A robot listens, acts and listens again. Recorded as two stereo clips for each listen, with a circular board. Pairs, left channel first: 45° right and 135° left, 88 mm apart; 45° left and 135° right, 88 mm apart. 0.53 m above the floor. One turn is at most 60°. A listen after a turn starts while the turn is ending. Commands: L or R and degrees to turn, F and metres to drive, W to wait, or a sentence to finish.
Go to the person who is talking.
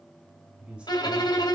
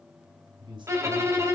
R60
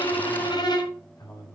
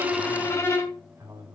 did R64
R60
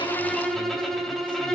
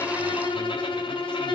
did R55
R30
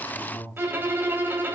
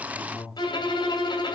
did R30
F1.0
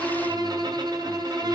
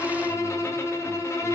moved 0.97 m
W
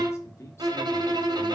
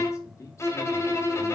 F1.0
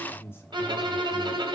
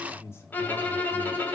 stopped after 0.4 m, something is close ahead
I am next to the man speaking.